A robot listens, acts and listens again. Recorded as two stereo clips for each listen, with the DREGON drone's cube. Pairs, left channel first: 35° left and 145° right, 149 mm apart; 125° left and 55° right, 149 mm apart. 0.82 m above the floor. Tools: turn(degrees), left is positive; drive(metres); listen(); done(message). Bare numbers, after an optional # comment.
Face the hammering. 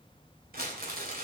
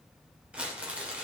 listen()
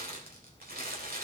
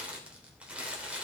listen()
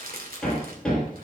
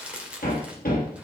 # The hammering: 120° left.
turn(120)
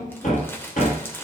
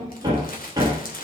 done("Facing the hammering, over 4 m away.")